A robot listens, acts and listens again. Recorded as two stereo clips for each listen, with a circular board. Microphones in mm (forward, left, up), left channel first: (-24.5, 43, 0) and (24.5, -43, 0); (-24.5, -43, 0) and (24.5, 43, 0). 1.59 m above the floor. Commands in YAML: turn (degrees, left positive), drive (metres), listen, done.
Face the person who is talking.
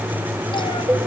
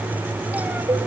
listen: true
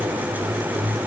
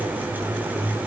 listen: true
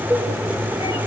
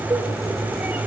done: "I can't make out anyone speaking, only a cowbell."